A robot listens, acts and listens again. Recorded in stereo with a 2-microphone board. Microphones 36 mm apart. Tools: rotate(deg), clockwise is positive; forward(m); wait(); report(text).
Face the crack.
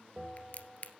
rotate(-40)
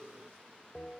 wait()
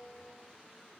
report("I heard a crack, but can't make it out now. It was about straight ahead or 100° left.")